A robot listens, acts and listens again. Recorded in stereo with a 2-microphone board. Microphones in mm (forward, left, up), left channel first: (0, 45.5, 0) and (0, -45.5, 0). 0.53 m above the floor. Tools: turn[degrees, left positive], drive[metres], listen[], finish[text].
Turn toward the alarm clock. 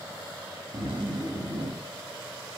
Action: listen[]
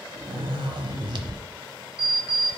Thought: The alarm clock: about 70° right or 110° right.
Action: turn[-70]
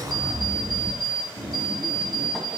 Action: finish[Facing the alarm clock, 1 to 2 m away.]